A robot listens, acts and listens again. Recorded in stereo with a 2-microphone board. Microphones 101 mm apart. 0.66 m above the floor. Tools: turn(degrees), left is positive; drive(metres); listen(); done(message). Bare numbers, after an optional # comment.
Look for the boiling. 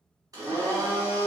listen()
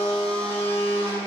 listen()
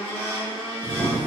turn(30)
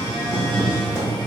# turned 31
# So it is at 15° right.
turn(-15)
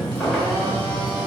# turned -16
done("Facing the boiling, 1 to 2 m away.")